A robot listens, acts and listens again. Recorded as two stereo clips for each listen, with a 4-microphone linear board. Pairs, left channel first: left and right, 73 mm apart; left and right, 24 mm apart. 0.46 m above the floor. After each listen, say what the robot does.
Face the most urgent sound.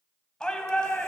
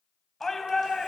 Turn 30° left.
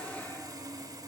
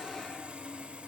Keep listening.
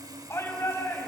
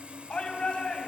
Turn 140° left.
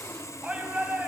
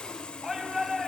Turn 15° right.
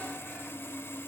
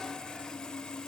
Keep listening.
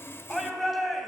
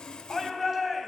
Found it: a shout, straight ahead.